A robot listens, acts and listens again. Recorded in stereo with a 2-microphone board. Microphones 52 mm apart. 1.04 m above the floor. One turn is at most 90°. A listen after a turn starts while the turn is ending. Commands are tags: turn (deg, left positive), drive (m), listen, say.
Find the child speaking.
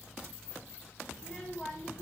<turn deg="30"/>
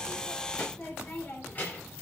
<turn deg="90"/>
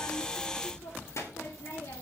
<turn deg="70"/>
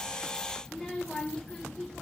<turn deg="10"/>
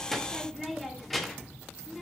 <say>Facing the child speaking.</say>